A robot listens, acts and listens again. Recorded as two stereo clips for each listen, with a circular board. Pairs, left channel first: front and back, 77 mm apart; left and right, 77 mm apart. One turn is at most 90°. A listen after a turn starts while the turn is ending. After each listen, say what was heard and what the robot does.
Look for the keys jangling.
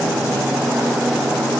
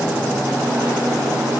Keep listening.
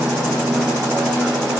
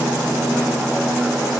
Keep listening.
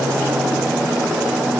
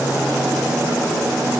I can't make out keys jangling.